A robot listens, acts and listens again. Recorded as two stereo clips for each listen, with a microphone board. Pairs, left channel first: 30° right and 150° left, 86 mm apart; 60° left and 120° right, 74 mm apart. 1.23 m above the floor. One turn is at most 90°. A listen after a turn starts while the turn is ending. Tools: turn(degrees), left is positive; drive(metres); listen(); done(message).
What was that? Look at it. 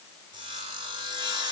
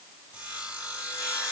turn(degrees=90)
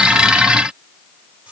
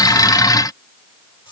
turn(degrees=70)
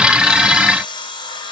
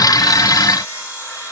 done("Found it: sawing, straight ahead.")